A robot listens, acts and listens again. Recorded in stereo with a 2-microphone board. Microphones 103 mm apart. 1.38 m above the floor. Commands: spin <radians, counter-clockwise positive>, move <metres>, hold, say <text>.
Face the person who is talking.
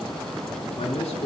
spin 1.57
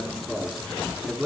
say Facing the man speaking, over 4 m away.